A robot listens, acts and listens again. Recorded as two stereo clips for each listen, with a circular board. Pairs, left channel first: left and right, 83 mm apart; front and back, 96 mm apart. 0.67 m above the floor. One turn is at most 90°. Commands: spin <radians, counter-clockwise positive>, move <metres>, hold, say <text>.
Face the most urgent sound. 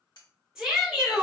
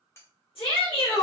spin -0.26
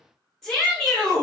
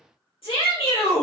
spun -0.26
say Facing the shout, 1 to 2 m away.